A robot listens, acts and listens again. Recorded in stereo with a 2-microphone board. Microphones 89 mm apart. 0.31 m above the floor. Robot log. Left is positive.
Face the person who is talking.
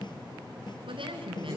note: The woman speaking: about 75° right or 105° right.
cmd yaw -75
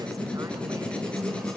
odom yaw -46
cmd idle
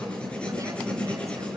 cmd idle
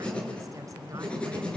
end: I heard a woman speaking, but can't make it out now. It was about 25° right or 60° right.